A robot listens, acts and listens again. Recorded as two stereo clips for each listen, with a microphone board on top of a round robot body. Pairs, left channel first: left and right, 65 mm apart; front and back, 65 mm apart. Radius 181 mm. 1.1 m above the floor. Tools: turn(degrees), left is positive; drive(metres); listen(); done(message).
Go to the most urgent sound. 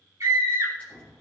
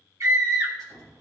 turn(degrees=-140)
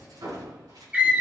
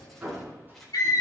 turn(degrees=-20)
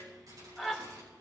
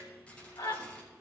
drive(metres=1.0)
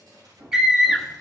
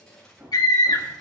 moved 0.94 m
turn(degrees=-10)
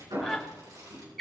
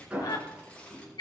drive(metres=1.0)
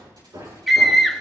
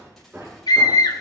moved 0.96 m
drive(metres=1.0)
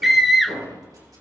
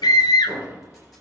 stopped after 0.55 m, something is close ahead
done("I am next to the scream.")